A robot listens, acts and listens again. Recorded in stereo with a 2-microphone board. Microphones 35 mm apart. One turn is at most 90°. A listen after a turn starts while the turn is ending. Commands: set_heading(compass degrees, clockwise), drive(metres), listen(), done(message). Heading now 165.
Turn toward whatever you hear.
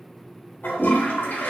set_heading(100)
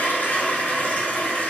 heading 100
set_heading(50)
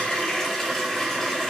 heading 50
set_heading(40)
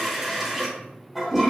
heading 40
done("Found it: a toilet flushing, straight ahead, 1 to 2 m away.")